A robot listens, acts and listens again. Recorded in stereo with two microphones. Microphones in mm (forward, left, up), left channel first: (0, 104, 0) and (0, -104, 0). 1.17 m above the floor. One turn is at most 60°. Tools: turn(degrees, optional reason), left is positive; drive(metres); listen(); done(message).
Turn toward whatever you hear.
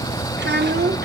turn(degrees=-55, reason="The child speaking: about 55° right or 125° right.")
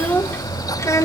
turn(degrees=15, reason="So it is at 15° left.")
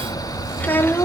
turn(degrees=10, reason="The child speaking is now 10° left.")
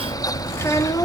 turn(degrees=20, reason="The child speaking is now 20° left.")
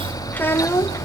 turn(degrees=15, reason="The child speaking is now 15° left.")
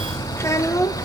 turn(degrees=15, reason="The child speaking is now 15° left.")
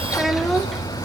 done("Facing the child speaking, 1 to 2 m away.")